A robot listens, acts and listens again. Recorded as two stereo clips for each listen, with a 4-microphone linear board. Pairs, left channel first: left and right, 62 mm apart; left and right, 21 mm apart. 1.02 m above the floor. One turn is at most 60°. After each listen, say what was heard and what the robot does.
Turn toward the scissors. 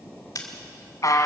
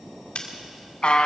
The scissors: about 70° left or 110° left. Turn 60° left.
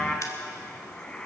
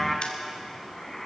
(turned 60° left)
So it is at 55° left. Turn 55° left.
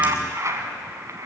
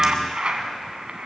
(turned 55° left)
Keep listening.
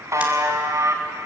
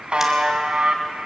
Keep listening.
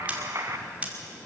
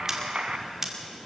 The scissors is now 20° right. Turn 20° right.
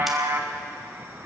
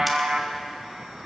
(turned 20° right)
Keep listening.
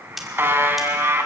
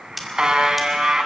Found it: scissors, straight ahead, 2 to 4 m away.